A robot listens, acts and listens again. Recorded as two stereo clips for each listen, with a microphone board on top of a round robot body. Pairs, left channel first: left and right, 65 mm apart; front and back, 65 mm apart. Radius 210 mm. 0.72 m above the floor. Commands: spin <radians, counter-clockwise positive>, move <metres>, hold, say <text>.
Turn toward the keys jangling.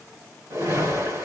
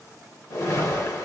hold
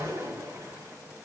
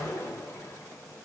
hold
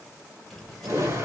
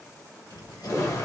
say Found it: keys jangling, straight ahead, 1 to 2 m away.